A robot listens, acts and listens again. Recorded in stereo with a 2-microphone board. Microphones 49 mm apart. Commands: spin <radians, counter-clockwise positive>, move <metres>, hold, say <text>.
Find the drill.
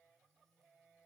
hold
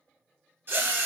spin -0.79
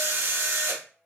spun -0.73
spin -1.48
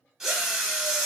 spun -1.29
spin -0.17
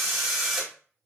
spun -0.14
say Found it: a drill, straight ahead, under 1 m away.